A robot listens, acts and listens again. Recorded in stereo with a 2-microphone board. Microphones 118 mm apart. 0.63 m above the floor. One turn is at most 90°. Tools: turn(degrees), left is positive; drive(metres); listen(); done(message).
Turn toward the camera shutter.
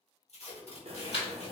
turn(degrees=60)
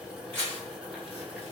turn(degrees=15)
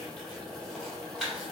done("Facing the camera shutter, 1 to 2 m away.")